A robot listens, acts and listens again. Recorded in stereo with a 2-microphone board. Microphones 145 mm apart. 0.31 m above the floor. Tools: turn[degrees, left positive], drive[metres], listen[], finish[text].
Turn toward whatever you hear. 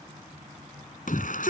Thought: The shout: about 70° left or 110° left.
Action: turn[70]
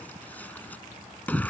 Thought: So it is at 10° left.
Action: turn[10]
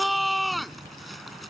Action: finish[Found it: a shout, straight ahead.]